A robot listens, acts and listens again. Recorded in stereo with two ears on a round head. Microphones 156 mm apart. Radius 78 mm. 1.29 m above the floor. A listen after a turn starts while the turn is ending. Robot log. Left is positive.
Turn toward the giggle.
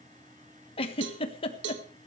note: The giggle: about 35° left or 145° left.
cmd yaw +35
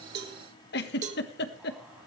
note: So it is at 110° left.
cmd yaw +110
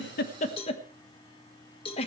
note: The giggle is now 35° left.
cmd yaw +35
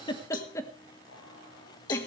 note: The giggle is now 15° left.
cmd yaw +15
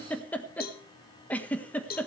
note: The giggle is now 10° left.
cmd yaw +10
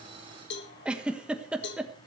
end: Facing the giggle.